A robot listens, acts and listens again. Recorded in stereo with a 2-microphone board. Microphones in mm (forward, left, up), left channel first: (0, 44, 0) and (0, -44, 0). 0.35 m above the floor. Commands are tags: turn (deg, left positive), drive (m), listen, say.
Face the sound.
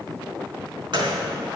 <turn deg="-65"/>
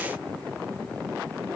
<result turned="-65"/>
<listen/>
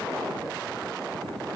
<say>I heard a gunshot, but can't make it out now. It was about straight ahead or 50° right.</say>